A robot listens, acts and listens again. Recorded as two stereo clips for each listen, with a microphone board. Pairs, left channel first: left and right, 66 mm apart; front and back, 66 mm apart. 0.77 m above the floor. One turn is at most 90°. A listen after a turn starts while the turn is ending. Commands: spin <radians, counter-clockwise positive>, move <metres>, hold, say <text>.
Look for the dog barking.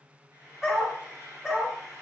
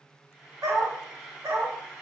spin -1.57
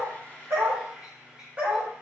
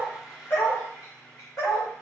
spin -0.35
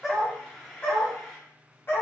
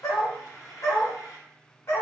spin 0.61
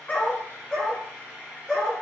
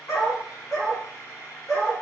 say Found it: a dog barking, straight ahead, 2 to 4 m away.